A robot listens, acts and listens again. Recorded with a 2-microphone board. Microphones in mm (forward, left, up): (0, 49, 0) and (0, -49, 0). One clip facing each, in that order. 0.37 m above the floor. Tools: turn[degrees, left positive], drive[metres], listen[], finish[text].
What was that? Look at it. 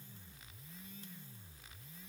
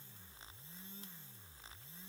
Action: listen[]
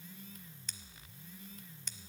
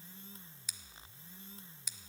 Action: turn[-30]
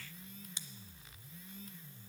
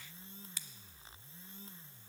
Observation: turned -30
Thought: So it is at 25° left.
Action: turn[25]
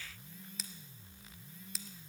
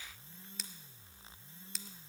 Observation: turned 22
Action: finish[Found it: scissors, straight ahead, under 1 m away.]